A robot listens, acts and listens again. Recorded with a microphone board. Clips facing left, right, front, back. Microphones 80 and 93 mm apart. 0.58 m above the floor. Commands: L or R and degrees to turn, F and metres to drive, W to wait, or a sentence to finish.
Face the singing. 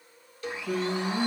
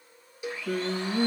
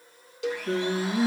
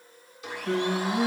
R90
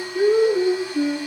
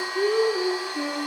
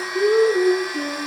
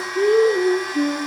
L15
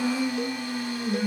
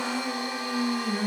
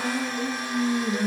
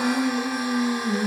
R15
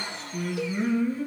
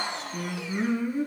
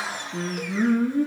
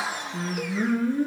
R20
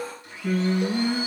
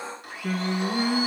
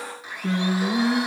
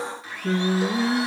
R10
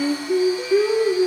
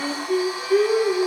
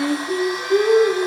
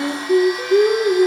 Facing the singing.